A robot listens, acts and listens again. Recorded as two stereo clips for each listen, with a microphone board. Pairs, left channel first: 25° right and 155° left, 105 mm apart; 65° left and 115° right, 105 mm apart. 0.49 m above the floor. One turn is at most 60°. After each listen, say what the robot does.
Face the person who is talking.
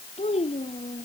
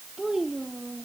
Turn 25° right.
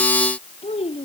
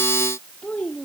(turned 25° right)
Turn 10° right.
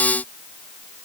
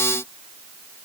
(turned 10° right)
Keep listening.
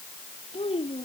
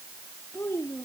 Found it: a child speaking, straight ahead.